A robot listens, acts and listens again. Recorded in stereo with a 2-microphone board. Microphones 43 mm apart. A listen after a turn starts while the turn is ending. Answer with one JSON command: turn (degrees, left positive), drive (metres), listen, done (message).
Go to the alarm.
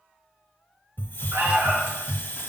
{"turn": -70}
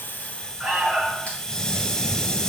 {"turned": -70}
{"turn": -10}
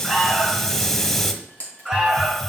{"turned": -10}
{"drive": 1.0}
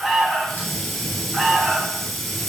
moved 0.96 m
{"drive": 1.0}
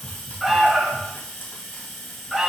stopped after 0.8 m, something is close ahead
{"done": "I am next to the alarm."}